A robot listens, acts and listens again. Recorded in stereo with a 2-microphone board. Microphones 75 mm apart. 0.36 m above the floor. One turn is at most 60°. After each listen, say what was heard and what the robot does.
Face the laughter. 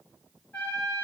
Keep listening.
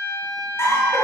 The laughter: about 40° left or 140° left. Turn 40° left.
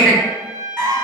So it is at 10° left. Turn 10° left.
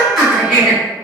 Facing the laughter.